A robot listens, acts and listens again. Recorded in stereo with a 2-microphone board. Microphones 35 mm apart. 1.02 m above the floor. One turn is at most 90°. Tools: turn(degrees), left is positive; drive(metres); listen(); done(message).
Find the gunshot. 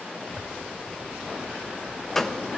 turn(degrees=30)
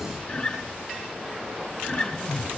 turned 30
listen()
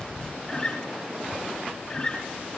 done("I heard a gunshot, but can't make it out now. It was about 25° right or 145° left.")